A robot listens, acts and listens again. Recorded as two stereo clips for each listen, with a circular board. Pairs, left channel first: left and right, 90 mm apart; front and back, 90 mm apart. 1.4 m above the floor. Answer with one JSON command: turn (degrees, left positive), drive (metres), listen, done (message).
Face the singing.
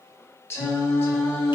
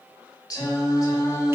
{"turn": 35}
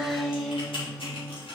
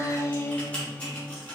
{"turn": 20}
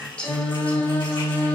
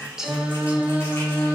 {"turn": 145}
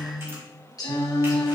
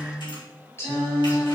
{"turn": 55}
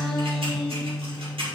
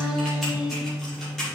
{"done": "Facing the singing, 2 to 4 m away."}